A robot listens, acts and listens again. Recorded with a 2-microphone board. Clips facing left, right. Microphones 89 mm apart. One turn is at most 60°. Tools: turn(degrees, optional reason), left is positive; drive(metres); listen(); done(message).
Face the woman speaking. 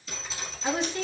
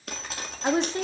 turn(degrees=-30, reason="The woman speaking: about 30° right or 150° right.")
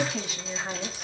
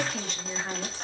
turn(degrees=10, reason="So it is at 10° left.")
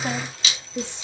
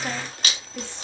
turn(degrees=20, reason="The woman speaking is now 20° left.")
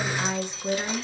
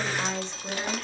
turn(degrees=20, reason="The woman speaking is now 20° left.")
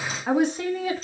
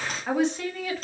turn(degrees=20, reason="The woman speaking is now 20° left.")
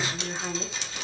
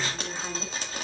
turn(degrees=15, reason="The woman speaking is now 15° left.")
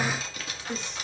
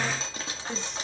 done("Facing the woman speaking, 1 to 2 m away.")